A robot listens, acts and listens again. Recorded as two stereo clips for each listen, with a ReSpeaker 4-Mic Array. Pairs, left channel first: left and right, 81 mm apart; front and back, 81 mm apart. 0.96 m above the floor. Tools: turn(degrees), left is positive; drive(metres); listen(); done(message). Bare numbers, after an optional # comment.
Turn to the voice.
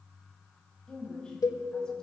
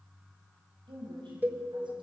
# The woman speaking: 170° left.
turn(170)
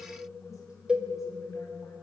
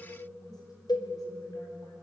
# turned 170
listen()
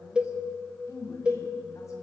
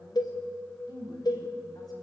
# The woman speaking is now 40° left.
turn(40)
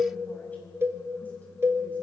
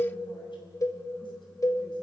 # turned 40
listen()
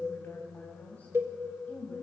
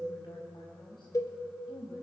# The woman speaking is now 20° left.
turn(20)
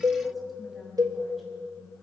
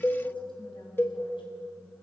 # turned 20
done("Facing the woman speaking, over 4 m away.")